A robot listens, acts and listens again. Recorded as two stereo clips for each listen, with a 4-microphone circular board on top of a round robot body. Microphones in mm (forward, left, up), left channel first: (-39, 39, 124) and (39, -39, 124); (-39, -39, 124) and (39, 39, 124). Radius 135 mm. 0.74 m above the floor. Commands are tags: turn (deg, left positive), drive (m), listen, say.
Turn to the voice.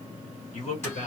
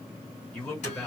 <turn deg="150"/>
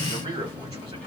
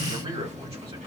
<say>Facing the man speaking, 2 to 4 m away.</say>